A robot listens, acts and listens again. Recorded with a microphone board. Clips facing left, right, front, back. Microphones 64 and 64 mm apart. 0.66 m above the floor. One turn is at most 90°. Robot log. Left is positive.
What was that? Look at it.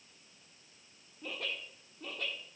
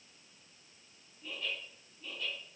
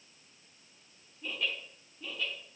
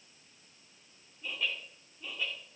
note: The laughter: 105° left.
cmd yaw +90
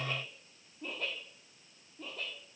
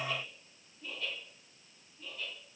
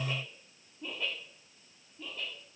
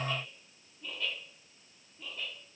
note: The laughter is now 95° left.
cmd yaw +90
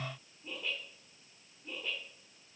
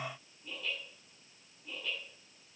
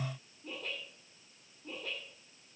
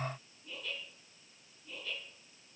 note: The laughter is now 20° left.
cmd yaw +20
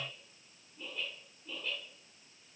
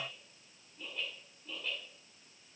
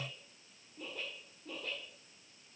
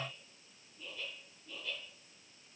end: Facing the laughter.